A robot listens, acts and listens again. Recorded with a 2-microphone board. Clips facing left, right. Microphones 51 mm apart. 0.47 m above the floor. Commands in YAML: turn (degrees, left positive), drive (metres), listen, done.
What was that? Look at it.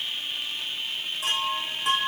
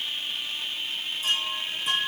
turn: 90
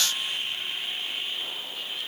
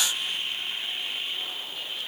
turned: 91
listen: true
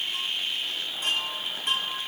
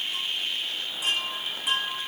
turn: -10
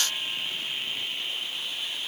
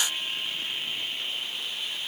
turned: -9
listen: true
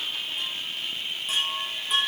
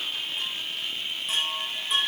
done: "Found it: a chime, straight ahead."